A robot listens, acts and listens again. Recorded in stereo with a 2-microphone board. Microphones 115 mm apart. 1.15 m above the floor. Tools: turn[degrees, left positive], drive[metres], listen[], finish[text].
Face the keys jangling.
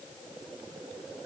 Action: listen[]
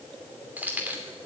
Thought: The keys jangling: about 15° right or 165° right.
Action: turn[-15]
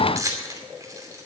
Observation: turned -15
Thought: So it is at 150° right.
Action: turn[-150]
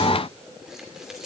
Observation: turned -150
Action: listen[]
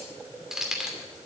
Action: finish[Facing the keys jangling.]